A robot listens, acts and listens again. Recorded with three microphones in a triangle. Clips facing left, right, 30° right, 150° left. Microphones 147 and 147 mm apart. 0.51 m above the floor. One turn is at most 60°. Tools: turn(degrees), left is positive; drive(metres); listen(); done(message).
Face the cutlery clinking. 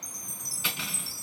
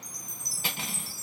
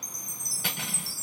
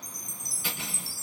turn(degrees=-45)
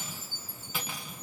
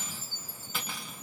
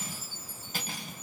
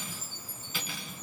done("Facing the cutlery clinking.")